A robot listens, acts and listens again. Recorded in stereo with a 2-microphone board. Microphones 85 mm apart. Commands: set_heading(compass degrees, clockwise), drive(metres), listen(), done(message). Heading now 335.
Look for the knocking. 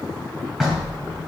set_heading(5)
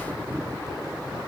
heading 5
listen()
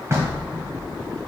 set_heading(150)
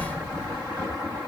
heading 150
set_heading(135)
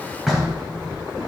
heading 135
done("Found it: knocking, straight ahead.")